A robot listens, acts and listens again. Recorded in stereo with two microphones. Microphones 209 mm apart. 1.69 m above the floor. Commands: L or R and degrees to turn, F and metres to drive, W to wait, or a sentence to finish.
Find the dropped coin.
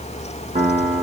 W
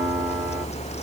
W
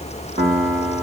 I can't make out a dropped coin, only a piano.